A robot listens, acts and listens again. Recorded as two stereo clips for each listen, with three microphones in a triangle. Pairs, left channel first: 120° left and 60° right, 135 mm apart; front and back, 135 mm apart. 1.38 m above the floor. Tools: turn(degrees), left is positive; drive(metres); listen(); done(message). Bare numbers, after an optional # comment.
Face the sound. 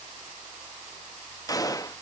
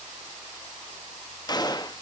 # The gunshot: 55° left.
turn(55)
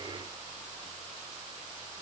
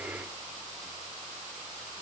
done("I heard a gunshot from this way, but can't make it out now.")